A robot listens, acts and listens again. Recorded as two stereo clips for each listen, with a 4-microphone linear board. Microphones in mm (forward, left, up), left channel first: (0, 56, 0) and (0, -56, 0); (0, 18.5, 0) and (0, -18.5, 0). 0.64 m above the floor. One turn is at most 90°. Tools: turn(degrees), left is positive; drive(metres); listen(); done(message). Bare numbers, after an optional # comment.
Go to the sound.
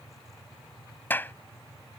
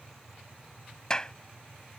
# The clap: about 15° left or 165° left.
turn(15)
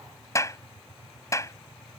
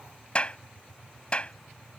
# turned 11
# So it is at 150° left.
turn(90)
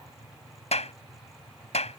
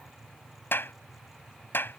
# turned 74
# The clap is now 80° left.
turn(80)
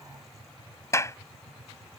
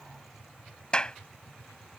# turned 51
# The clap is now 25° left.
turn(25)
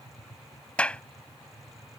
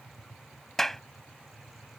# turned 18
# The clap is now 10° left.
turn(10)
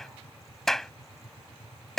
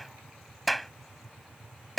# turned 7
drive(1.0)
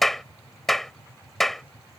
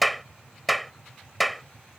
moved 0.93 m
drive(1.0)
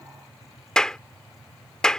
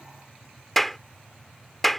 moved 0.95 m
drive(1.0)
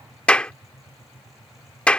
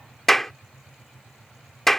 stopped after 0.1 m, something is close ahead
# The clap is now 10° left.
turn(10)
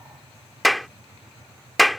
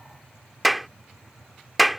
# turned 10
done("I am next to the clap.")